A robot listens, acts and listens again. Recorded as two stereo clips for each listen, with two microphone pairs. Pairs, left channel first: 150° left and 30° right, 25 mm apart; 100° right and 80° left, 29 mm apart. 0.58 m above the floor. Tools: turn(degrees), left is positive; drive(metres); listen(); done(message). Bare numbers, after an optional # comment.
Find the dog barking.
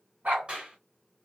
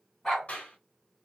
# The dog barking: 20° right.
turn(-20)
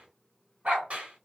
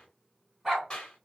done("Facing the dog barking.")